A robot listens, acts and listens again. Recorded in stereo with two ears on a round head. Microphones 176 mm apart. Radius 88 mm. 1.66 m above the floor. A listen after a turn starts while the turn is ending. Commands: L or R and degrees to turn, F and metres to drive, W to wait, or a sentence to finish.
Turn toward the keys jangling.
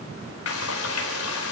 W
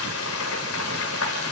W
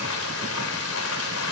I can't make out keys jangling, only frying.